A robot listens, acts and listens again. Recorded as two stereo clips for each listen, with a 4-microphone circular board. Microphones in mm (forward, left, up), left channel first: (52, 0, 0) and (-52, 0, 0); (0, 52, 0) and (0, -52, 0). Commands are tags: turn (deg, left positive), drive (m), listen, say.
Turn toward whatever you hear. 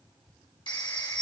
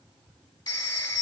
<turn deg="40"/>
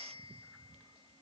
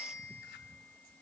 <turn deg="-10"/>
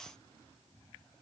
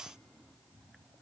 <listen/>
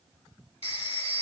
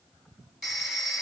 <say>Facing the phone ringing, 1 to 2 m away.</say>